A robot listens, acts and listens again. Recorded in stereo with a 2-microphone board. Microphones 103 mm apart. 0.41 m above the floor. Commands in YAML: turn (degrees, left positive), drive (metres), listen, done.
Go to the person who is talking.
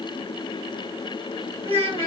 turn: -65
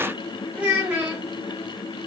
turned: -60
turn: -15
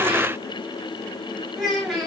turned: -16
drive: 1.0
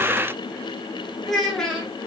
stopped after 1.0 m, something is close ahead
done: "Arrived at the child speaking, straight ahead."